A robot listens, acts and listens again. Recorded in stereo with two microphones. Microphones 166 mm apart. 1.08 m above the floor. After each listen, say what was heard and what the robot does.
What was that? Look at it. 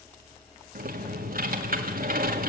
The typing on a keyboard: about 60° right or 120° right. Turn 60° right.
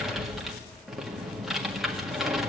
Facing the typing on a keyboard.